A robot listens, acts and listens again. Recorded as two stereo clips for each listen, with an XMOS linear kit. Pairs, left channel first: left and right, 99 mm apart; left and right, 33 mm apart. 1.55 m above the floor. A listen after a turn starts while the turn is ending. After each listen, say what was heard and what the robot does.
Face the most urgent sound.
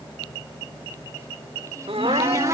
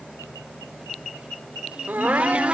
Turn 90° right.
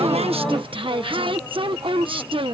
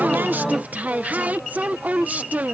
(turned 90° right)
Keep listening.
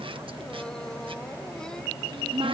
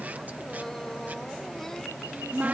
Keep listening.
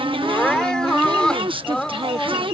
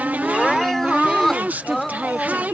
The crying is now 10° left. Turn 10° left.
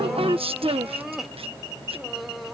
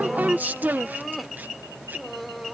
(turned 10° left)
Found it: crying, straight ahead.